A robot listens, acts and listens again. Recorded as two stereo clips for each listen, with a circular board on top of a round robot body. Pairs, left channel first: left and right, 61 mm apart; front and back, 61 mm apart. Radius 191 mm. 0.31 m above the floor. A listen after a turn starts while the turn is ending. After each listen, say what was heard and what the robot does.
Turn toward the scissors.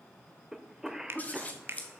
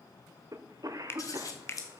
The scissors: 25° left. Turn 25° left.
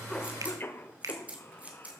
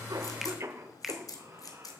The scissors is now 20° right. Turn 20° right.
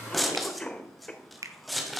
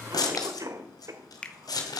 Facing the scissors.